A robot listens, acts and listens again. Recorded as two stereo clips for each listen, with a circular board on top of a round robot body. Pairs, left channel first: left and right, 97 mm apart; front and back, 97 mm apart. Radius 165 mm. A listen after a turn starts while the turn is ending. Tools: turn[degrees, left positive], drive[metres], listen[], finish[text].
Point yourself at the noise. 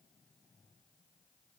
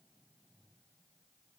Action: listen[]
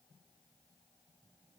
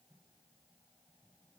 Action: listen[]
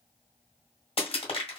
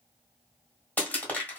Thought: The crushing: 75° left.
Action: turn[75]
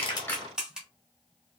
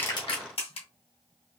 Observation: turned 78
Action: finish[Found it: crushing, straight ahead, 1 to 2 m away.]